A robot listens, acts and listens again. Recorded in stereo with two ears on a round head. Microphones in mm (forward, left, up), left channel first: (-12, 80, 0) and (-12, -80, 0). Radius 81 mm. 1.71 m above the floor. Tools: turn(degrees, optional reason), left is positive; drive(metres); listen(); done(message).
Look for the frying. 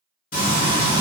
turn(degrees=45, reason="The frying: about 45° left or 135° left.")
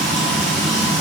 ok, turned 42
done("Found it: frying, straight ahead.")